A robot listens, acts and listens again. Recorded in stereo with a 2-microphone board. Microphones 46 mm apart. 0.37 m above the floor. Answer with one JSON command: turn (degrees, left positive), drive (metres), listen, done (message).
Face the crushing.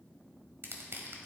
{"turn": -60}
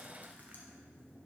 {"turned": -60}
{"listen": true}
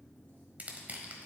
{"turn": -40}
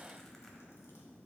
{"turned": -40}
{"listen": true}
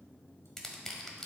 {"turn": 10}
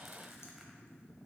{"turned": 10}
{"listen": true}
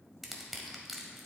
{"done": "Facing the crushing."}